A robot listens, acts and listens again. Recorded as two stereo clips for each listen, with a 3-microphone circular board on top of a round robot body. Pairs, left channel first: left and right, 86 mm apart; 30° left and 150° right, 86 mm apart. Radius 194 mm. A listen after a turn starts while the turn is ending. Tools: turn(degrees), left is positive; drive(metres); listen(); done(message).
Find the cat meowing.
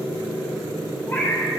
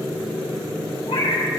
turn(degrees=25)
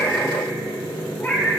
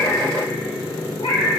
turn(degrees=25)
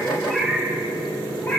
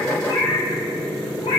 turn(degrees=25)
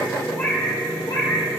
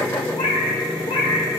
turn(degrees=45)
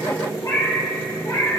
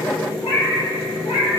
turn(degrees=35)
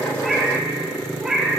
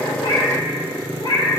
done("Found it: a cat meowing, straight ahead, 1 to 2 m away.")